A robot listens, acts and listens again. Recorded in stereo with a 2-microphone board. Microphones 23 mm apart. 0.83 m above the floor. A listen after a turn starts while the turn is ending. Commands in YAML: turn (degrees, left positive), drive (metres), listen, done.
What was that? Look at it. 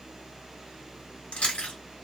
turn: 65
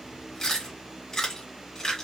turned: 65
turn: 30
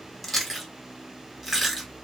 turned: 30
done: "Found it: chewing, straight ahead."